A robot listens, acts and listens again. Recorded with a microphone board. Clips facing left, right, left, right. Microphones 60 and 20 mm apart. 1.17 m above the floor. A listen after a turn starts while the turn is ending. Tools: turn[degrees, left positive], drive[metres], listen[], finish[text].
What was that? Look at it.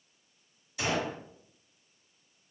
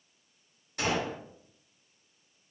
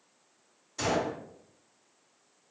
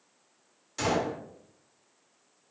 Thought: The gunshot: about 50° right or 130° right.
Action: turn[-50]
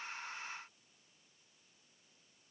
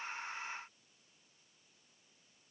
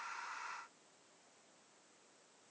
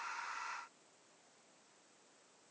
Action: listen[]
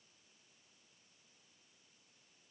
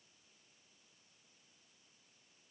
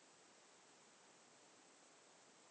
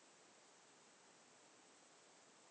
Action: finish[I heard a gunshot, but can't make it out now. It was about straight ahead or 80° right.]